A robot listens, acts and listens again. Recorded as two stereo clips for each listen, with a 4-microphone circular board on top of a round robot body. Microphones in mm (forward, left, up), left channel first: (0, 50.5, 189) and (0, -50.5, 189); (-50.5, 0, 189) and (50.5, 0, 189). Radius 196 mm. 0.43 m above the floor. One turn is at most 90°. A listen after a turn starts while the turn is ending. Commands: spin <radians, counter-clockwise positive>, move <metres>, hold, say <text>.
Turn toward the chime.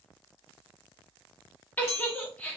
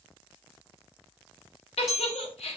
spin 1.48
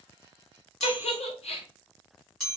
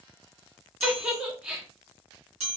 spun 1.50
say Facing the chime, 2 to 4 m away.